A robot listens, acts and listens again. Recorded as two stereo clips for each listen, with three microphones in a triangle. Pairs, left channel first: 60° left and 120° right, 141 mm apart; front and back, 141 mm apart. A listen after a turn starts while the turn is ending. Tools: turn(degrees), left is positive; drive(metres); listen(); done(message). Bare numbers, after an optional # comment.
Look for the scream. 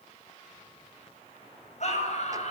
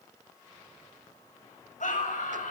# The scream: 25° left.
turn(25)
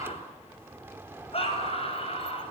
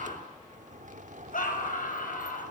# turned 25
# The scream is now 15° left.
turn(15)
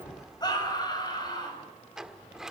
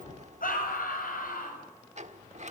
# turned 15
done("Found it: a scream, straight ahead.")